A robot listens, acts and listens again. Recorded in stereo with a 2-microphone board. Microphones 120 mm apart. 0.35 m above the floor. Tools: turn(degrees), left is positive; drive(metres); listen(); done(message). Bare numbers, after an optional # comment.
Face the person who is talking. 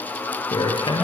# The man speaking: about 40° left or 140° left.
turn(40)
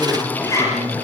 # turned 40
done("Found it: a man speaking, straight ahead.")